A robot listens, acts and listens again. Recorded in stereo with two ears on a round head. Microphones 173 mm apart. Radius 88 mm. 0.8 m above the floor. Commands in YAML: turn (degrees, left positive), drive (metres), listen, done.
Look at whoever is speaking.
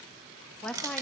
turn: 30
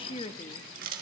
turn: 145
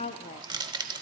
turn: 35
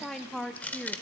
done: "Found it: a woman speaking, straight ahead, under 1 m away."